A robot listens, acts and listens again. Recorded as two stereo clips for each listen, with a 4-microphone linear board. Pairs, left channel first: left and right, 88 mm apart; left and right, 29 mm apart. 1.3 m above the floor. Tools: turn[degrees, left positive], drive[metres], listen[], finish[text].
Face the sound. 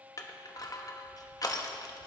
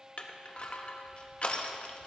Thought: The crushing: about 45° left or 135° left.
Action: turn[45]
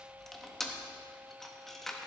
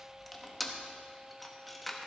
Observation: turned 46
Action: finish[Facing the crushing.]